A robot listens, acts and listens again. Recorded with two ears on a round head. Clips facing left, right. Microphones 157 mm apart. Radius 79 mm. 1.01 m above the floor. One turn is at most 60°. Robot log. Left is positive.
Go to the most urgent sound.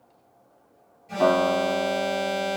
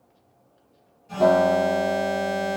note: The alarm: about 15° left or 165° left.
cmd yaw +15
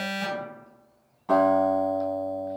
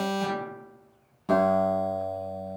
cmd fwd 1.0
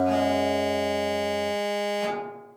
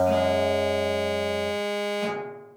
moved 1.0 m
cmd fwd 1.0
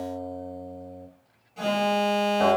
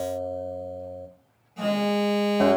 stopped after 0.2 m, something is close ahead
end: Arrived at the alarm, straight ahead.